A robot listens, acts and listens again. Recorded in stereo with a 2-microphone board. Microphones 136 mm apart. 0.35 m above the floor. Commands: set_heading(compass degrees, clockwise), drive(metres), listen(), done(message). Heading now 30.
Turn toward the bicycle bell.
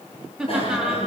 set_heading(345)
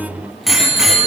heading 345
done("Facing the bicycle bell, over 4 m away.")